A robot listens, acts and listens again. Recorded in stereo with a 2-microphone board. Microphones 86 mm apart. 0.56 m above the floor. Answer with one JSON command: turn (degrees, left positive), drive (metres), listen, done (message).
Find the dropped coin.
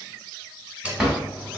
{"turn": -30}
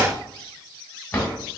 {"listen": true}
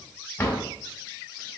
{"done": "I heard a dropped coin, but can't make it out now. It was about 15° left or 135° right."}